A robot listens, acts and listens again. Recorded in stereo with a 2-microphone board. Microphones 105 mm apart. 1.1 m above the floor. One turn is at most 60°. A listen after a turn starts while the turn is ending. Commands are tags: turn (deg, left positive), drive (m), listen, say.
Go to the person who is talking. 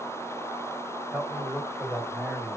<turn deg="-30"/>
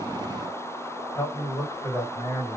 <turn deg="25"/>
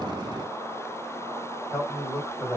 <drive m="1.0"/>
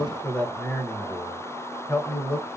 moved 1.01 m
<turn deg="15"/>
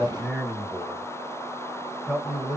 <drive m="1.0"/>
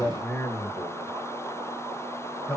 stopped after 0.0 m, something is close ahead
<turn deg="10"/>
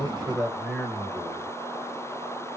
<say>I am next to the man speaking.</say>